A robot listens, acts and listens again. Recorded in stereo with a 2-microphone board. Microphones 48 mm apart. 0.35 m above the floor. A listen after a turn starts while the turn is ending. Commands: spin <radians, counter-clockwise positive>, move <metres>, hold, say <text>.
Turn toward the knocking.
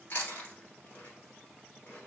hold
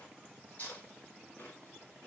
hold
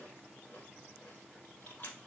say I can't make out knocking, only chewing.